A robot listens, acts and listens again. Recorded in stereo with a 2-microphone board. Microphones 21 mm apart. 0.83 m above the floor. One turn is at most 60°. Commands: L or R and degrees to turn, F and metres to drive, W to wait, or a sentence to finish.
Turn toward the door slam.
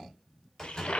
L30
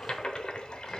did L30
W
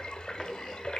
I heard a door slam, but can't make it out now. It was about 15° right or 135° left.